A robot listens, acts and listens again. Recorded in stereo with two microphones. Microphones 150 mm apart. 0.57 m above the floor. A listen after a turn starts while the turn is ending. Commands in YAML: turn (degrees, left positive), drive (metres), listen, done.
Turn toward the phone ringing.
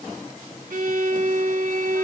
listen: true
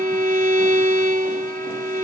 listen: true
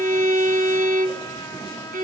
done: "I can't make out a phone ringing to turn to."